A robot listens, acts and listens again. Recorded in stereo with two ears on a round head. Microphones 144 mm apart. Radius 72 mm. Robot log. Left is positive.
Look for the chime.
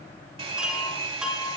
cmd yaw -30
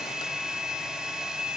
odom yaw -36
cmd idle
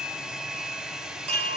note: So it is at 140° right.
cmd yaw -140
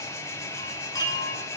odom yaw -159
note: The chime is now 25° left.
cmd yaw +25
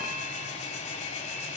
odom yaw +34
note: Nothing new. It was at 10° right.
cmd yaw -10
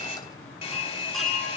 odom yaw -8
end: Found it: a chime, straight ahead.